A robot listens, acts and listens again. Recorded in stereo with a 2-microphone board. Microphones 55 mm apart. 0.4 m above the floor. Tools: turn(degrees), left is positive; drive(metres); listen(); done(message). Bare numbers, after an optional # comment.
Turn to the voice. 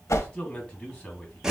# The man speaking: about 25° left or 155° left.
turn(25)
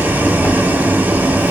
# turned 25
listen()
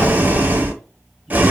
listen()
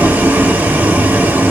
done("I heard a man speaking, but can't make it out now. It was about straight ahead or 130° left.")